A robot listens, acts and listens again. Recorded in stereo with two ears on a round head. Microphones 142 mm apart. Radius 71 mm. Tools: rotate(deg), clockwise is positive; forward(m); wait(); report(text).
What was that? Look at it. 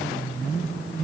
wait()
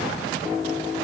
wait()
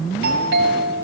rotate(90)
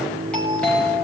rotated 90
report("Facing the doorbell, over 4 m away.")